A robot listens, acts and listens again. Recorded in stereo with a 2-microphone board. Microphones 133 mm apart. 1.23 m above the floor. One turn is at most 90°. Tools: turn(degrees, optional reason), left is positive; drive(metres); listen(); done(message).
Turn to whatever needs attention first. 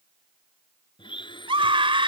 turn(degrees=-40, reason="The scream: about 40° right or 140° right.")
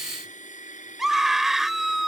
done("Facing the scream.")